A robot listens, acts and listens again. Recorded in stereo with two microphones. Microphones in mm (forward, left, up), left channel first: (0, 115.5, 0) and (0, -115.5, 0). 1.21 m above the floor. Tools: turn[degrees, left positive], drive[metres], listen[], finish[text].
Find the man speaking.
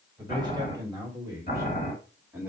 Action: turn[-30]
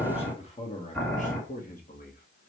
Thought: So it is at 40° left.
Action: turn[40]
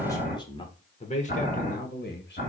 Thought: The man speaking is now 45° left.
Action: turn[45]
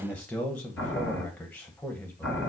Action: finish[Found it: a man speaking, straight ahead, 1 to 2 m away.]